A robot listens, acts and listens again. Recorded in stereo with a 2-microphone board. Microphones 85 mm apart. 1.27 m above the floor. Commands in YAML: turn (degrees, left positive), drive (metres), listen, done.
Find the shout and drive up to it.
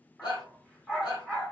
turn: 65
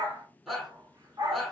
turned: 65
drive: 1.0
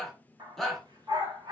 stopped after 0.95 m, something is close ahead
done: "Arrived at the shout, straight ahead."